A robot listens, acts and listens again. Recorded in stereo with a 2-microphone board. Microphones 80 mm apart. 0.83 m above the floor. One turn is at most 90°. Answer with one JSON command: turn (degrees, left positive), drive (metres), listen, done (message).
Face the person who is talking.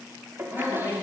{"turn": 35}
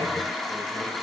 {"listen": true}
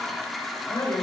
{"turn": 90}
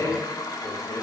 {"turn": 40}
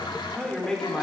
{"done": "Found it: a man speaking, straight ahead."}